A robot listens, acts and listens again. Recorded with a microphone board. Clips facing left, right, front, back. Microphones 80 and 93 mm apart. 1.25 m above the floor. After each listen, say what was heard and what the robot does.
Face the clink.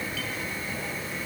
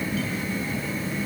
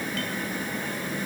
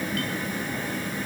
Keep listening.
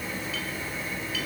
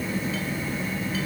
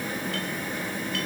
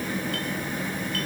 Keep listening.
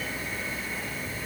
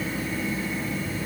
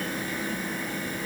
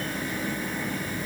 I can't make out a clink.